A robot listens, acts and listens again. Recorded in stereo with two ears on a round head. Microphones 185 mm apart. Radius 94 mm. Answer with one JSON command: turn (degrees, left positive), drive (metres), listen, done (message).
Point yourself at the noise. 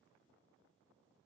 {"listen": true}
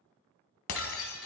{"turn": 90}
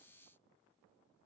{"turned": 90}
{"done": "Facing where the breaking glass came from. I can't hear it now."}